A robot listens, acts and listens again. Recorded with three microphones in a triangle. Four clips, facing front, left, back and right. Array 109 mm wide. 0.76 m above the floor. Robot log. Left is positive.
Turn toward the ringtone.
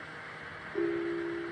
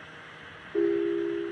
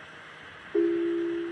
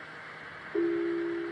note: The ringtone: 175° right.
cmd yaw -175
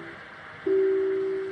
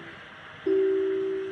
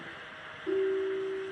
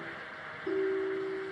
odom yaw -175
note: The ringtone is now 45° left.
cmd yaw +45
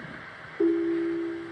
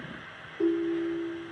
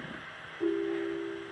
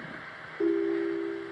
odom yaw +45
end: Facing the ringtone.